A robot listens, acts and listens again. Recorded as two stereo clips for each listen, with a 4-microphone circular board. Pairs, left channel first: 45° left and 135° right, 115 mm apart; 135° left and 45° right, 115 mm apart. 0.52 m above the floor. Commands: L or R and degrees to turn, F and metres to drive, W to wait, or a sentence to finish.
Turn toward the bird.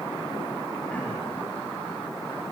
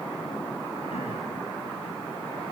W
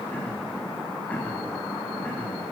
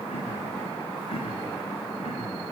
W
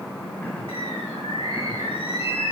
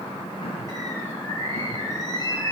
L80
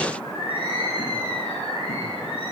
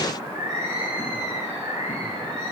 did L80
L20
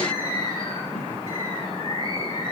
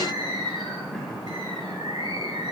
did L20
Found it: a bird, straight ahead.